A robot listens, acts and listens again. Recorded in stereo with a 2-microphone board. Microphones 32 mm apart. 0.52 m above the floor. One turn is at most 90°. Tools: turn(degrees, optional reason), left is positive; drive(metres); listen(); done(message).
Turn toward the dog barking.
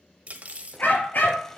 turn(degrees=60, reason="The dog barking: about 60° left or 120° left.")
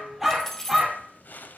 turn(degrees=-10, reason="So it is at 10° right.")
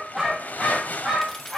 done("Facing the dog barking, over 4 m away.")